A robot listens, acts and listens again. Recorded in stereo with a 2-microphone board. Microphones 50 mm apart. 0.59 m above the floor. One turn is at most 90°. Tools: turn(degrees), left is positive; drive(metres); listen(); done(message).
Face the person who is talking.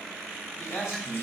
turn(degrees=60)
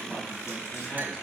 listen()
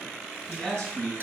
turn(degrees=20)
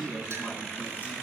done("Found it: a man speaking, straight ahead.")